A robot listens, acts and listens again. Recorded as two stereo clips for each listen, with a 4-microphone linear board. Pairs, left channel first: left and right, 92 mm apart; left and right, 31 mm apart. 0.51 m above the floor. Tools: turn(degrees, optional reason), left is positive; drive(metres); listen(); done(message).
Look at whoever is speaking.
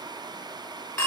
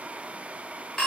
listen()
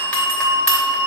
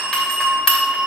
listen()
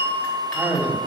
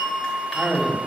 turn(degrees=-20, reason="The man speaking: about 20° right or 160° right.")
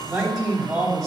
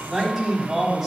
done("Facing the man speaking.")